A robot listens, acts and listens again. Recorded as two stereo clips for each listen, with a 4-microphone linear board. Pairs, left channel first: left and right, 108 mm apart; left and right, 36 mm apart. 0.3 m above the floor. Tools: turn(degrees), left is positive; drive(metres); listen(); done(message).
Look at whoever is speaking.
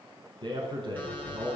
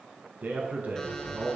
turn(degrees=-50)
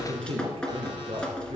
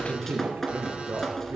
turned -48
turn(degrees=-75)
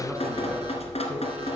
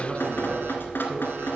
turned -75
listen()
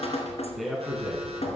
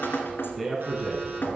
done("Found it: a man speaking, straight ahead.")